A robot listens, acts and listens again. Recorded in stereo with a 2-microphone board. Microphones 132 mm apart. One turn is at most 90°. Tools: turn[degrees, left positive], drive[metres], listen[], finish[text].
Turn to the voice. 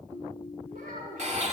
Action: turn[-90]
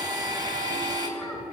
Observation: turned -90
Action: listen[]
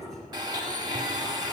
Action: listen[]
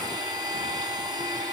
Action: finish[Facing where the child speaking came from. I can't hear it now.]